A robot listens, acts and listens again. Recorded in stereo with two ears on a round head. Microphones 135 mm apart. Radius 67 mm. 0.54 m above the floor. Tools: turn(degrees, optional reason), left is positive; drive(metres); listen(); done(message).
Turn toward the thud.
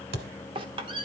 turn(degrees=-75, reason="The thud: about 75° right or 105° right.")
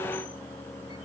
listen()
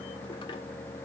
done("I heard a thud, but can't make it out now. It was about straight ahead or 30° right.")